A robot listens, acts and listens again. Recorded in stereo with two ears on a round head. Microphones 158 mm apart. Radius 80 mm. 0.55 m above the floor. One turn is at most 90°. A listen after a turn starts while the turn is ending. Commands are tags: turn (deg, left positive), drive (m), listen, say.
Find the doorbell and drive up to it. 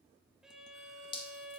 <listen/>
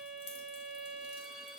<listen/>
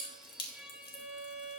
<say>I can't make out a doorbell, only dripping and a violin.</say>